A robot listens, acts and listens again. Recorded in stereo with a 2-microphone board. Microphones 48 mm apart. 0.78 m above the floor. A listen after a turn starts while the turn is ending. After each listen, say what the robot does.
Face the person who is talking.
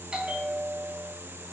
Keep listening.
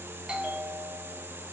Keep listening.
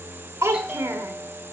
Turn 90° right.
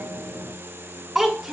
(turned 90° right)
Turn 10° right.
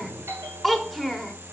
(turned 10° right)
Facing the child speaking.